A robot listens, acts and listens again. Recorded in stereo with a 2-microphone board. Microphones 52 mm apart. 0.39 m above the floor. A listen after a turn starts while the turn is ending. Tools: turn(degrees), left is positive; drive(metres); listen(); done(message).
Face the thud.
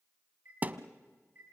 turn(degrees=-30)
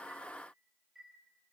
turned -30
listen()
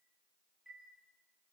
done("I heard a thud, but can't make it out now. It was about straight ahead or 120° right.")